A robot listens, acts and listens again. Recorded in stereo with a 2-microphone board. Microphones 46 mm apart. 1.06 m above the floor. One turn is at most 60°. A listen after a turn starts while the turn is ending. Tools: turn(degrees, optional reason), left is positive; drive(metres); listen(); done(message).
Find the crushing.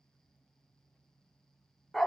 listen()
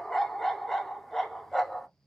listen()
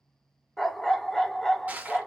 turn(degrees=-35, reason="The crushing: about 35° right or 145° right.")
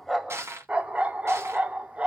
turn(degrees=-60, reason="So it is at 110° right.")
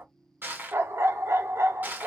turn(degrees=-40, reason="The crushing is now 40° right.")
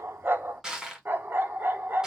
turn(degrees=-15, reason="The crushing is now 15° right.")
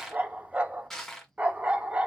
done("Facing the crushing, 1 to 2 m away.")